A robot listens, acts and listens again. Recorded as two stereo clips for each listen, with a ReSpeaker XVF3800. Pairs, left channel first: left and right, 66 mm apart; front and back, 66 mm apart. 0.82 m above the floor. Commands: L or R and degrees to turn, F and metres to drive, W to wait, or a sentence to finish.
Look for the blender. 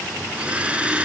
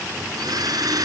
R165
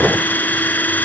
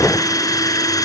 L25
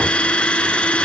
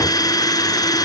L15
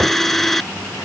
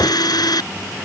Facing the blender.